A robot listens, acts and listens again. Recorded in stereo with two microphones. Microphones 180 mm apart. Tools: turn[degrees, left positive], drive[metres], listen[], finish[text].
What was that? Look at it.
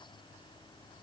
Action: listen[]
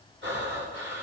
Action: turn[-90]
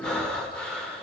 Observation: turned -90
Action: finish[Facing the breathing.]